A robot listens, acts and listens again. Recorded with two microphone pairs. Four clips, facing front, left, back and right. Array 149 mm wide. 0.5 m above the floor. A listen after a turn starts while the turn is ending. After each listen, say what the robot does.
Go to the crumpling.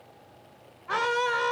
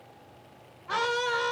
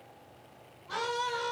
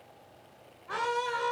Keep listening.
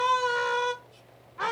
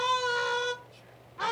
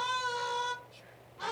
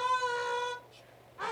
Keep listening.
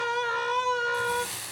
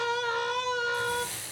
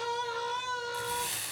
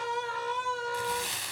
Turn 75° right.
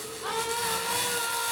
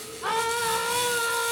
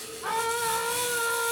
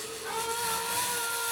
Drive 1.0 m forward.
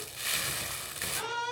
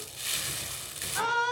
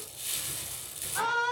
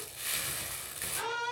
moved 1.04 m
Drive 1.0 m forward.
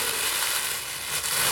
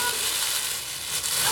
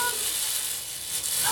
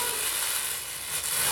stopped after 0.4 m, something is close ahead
Turn 15° left.
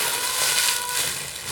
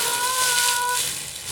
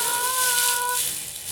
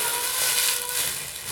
Arrived at the crumpling, straight ahead.